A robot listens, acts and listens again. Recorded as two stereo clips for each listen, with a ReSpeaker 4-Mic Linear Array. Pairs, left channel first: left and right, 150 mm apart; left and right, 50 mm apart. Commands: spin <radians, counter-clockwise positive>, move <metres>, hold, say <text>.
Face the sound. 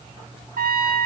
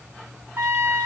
spin -1.22
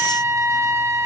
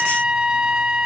spin -0.35
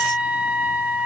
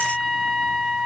spin -0.17
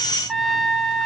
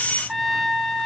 say Found it: a trumpet, straight ahead, under 1 m away.